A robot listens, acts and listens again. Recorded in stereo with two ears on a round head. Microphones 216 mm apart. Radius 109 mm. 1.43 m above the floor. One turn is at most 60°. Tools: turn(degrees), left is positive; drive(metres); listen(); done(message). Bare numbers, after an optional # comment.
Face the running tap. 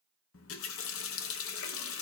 # The running tap: about 60° left or 120° left.
turn(60)
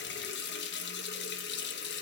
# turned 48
# So it is at 55° left.
turn(55)
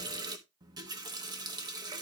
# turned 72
# The running tap is now 20° right.
turn(-20)
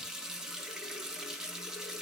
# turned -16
done("Found it: a running tap, straight ahead, 1 to 2 m away.")